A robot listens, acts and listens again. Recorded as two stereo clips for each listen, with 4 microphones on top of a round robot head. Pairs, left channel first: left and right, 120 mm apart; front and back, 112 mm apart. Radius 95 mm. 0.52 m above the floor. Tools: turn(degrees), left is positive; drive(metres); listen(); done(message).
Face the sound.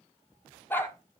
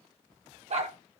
turn(degrees=165)
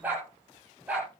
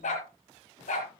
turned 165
turn(degrees=-10)
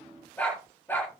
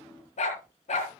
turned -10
turn(degrees=10)
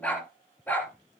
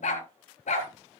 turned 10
turn(degrees=10)
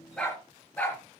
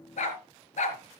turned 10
turn(degrees=10)
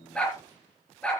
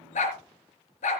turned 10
done("Facing the dog barking.")